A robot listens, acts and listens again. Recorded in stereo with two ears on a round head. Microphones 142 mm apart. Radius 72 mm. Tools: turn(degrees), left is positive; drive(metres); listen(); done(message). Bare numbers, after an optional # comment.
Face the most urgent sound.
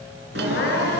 turn(90)
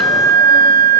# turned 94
listen()
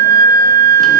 listen()
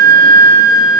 done("I heard crying from this way, but can't make it out now.")